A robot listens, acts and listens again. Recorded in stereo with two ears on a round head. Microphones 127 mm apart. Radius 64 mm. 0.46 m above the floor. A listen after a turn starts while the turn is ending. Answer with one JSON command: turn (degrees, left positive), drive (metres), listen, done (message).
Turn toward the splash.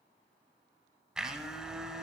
{"listen": true}
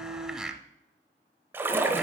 {"turn": -15}
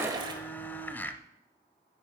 {"turn": -150}
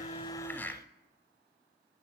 {"done": "Facing where the splash came from. I can't hear it now."}